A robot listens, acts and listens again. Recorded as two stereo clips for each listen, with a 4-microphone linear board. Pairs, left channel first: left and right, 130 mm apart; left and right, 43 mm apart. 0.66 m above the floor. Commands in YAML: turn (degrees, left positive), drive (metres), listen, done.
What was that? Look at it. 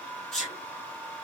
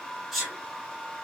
turn: 30
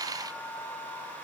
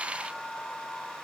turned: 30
listen: true
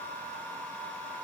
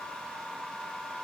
done: "I heard a sneeze, but can't make it out now. It was about 20° right or 140° left."